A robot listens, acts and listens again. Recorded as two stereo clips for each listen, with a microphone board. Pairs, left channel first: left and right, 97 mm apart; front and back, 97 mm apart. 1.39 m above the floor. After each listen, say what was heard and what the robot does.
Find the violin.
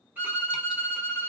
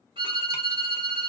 The violin: 160° right. Turn 160° right.
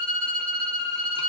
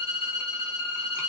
The violin is now 10° left. Turn 10° left.
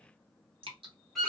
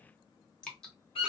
Facing the violin, 1 to 2 m away.